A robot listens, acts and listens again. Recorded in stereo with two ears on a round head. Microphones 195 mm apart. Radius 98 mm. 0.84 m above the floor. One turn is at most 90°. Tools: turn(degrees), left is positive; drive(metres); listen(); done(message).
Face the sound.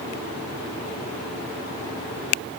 listen()
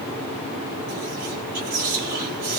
turn(degrees=-30)
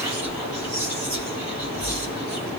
done("Found it: whispering, straight ahead, 1 to 2 m away.")